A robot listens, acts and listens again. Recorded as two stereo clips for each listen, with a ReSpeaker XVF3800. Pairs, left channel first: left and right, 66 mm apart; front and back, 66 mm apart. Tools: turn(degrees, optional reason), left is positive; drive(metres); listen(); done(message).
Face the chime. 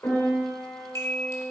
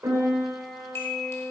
turn(degrees=45, reason="The chime: 45° left.")
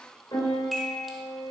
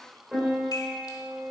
listen()
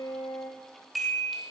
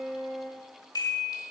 done("Facing the chime, 1 to 2 m away.")